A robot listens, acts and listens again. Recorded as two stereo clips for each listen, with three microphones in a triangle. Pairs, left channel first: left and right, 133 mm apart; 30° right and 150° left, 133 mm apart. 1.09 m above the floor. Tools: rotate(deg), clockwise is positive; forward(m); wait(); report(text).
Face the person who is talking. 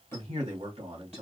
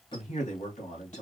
rotate(50)
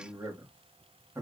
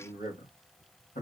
rotate(20)
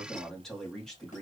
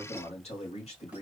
report("Facing the man speaking, 2 to 4 m away.")